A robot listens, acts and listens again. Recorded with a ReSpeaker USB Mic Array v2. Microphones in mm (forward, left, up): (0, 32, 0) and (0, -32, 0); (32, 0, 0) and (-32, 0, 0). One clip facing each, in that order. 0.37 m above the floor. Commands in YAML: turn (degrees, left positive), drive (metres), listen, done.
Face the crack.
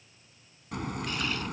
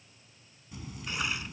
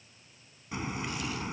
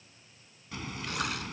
turn: 70
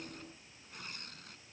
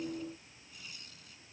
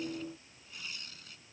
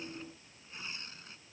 done: "I heard a crack from this way, but can't make it out now."